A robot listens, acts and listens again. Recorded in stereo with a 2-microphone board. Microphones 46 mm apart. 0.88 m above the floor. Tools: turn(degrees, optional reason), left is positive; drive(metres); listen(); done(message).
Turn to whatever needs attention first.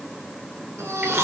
turn(degrees=-90)
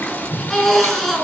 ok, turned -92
done("Facing the baby crying, over 4 m away.")